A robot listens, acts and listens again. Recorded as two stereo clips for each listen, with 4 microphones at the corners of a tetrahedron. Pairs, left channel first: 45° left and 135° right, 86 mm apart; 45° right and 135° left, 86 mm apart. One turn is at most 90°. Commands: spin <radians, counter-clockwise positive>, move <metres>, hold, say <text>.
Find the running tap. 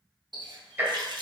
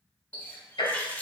spin -1.57
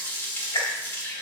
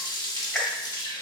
spin -0.26
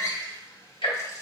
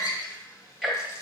say Facing the running tap.